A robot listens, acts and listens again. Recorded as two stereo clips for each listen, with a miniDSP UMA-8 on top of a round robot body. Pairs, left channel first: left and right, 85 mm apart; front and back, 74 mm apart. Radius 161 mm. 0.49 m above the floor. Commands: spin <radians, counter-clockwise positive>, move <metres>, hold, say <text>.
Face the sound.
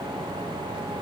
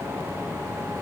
hold
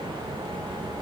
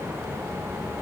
hold
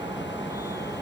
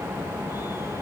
say I can't make out anything to turn to.